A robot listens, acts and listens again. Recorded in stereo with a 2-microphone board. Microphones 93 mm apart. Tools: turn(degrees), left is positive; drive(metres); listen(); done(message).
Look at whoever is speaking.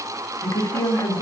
turn(degrees=55)
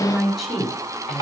done("Found it: a woman speaking, straight ahead.")